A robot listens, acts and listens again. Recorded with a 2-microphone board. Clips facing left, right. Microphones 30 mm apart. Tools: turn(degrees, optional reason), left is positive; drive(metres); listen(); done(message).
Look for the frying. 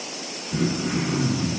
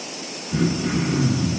listen()
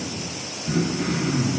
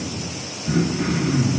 listen()
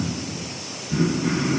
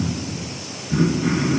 done("I can't make out frying, only throat clearing.")